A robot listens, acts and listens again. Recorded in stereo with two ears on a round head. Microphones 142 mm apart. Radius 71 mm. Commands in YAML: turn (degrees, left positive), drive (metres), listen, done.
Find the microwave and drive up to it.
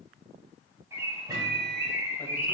turn: -25
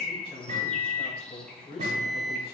turn: -130
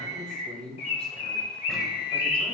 listen: true
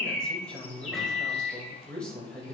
drive: 1.0
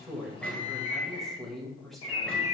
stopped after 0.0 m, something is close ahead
done: "Something is in my way. I am facing the microwave but have not reached it."